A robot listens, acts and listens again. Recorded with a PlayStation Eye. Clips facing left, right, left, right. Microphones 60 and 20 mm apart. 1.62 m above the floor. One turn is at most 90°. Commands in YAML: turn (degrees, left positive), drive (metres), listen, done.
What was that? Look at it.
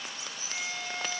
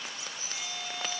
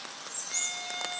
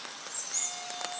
turn: 55
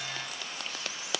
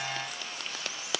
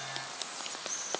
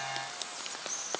listen: true
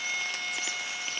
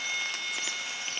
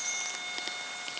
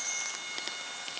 done: "Found it: a violin, straight ahead, over 4 m away."